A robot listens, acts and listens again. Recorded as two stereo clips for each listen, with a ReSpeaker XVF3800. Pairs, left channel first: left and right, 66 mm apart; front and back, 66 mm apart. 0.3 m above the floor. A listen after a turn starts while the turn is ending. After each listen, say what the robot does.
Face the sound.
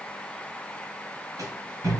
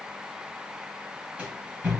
Turn 100° right.
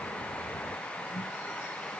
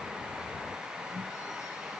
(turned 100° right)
Turn 25° left.
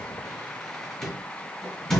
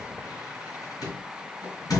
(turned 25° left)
Turn 10° left.
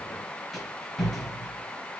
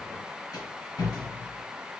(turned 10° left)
Facing the rattle, 2 to 4 m away.